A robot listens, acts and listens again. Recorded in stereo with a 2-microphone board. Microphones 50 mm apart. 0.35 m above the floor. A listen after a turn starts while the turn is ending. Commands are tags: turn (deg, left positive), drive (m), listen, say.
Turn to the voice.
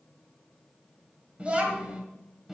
<turn deg="-30"/>
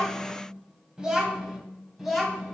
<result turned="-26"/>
<turn deg="30"/>
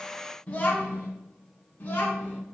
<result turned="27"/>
<turn deg="145"/>
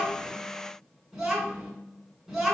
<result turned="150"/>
<say>Facing the child speaking, 2 to 4 m away.</say>